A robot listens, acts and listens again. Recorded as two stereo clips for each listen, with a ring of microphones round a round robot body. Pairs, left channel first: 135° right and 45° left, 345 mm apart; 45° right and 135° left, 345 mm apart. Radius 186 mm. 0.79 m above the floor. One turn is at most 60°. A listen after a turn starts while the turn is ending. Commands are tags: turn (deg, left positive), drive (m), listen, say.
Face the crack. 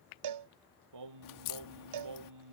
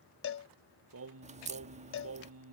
<turn deg="-60"/>
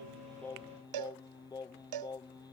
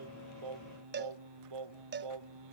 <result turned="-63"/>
<turn deg="-60"/>
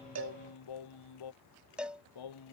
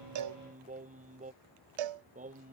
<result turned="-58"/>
<turn deg="-35"/>
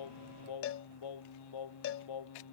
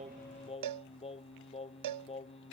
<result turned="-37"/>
<say>I heard a crack from this way, but can't make it out now.</say>